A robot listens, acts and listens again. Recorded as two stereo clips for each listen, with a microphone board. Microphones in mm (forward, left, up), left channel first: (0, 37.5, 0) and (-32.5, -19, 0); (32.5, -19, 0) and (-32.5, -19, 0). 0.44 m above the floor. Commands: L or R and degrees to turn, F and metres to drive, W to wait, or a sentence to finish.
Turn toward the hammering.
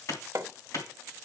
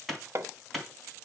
R145
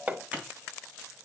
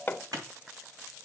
R60
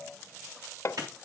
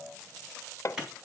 L25
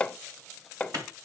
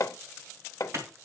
R10
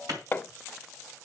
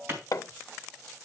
Facing the hammering.